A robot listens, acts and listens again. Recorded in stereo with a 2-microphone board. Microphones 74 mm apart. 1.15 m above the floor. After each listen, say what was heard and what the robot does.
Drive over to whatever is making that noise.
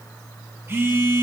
The phone buzzing: about 35° right or 145° right. Turn 35° right.
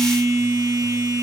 So it is at 110° right. Turn 110° right.
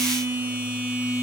The phone buzzing is now 30° right. Turn 30° right.
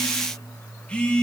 The phone buzzing is now 20° left. Turn 20° left.
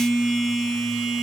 Drive 1.0 m forward.
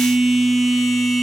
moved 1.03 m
Drive 1.0 m forward.
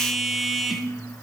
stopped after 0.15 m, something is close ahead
Arrived at the phone buzzing, straight ahead.